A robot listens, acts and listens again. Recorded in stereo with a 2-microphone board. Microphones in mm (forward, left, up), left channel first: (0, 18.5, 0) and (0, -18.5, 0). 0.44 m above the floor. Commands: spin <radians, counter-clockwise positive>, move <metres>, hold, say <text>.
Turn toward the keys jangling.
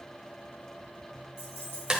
spin 1.22
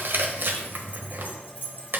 spin 1.05
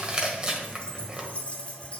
spin 0.52
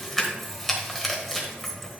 say Found it: keys jangling, straight ahead, 2 to 4 m away.